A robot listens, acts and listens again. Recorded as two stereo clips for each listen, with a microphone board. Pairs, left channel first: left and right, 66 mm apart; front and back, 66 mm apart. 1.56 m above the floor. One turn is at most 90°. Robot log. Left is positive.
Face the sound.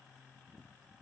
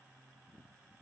cmd idle
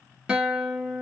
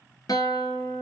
note: The guitar: 15° right.
cmd yaw -15
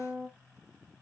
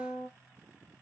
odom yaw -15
end: Found it: a guitar, straight ahead.